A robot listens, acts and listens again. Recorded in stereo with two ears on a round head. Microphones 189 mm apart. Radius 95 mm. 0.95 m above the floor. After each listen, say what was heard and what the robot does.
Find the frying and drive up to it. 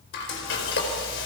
The frying: about 60° left or 120° left. Turn 60° left.
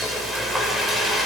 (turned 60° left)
Drive 1.0 m forward.
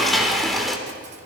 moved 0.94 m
Drive 1.0 m forward.
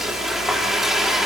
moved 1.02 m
Drive 1.0 m forward.
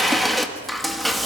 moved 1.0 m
Drive 1.0 m forward.
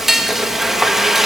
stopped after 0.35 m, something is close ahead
I am next to the frying.